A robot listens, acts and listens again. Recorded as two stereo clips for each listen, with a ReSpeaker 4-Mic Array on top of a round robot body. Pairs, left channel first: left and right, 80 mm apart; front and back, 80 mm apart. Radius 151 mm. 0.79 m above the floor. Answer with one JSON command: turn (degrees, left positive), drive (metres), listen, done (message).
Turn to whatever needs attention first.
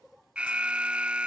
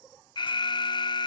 {"turn": -15}
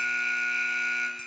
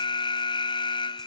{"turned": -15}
{"done": "Found it: an alarm, straight ahead."}